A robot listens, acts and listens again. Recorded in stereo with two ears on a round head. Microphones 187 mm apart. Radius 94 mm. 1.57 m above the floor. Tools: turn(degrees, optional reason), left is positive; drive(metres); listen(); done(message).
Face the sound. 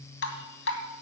turn(degrees=55, reason="The dripping: about 55° left or 125° left.")
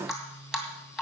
done("Facing the dripping, 2 to 4 m away.")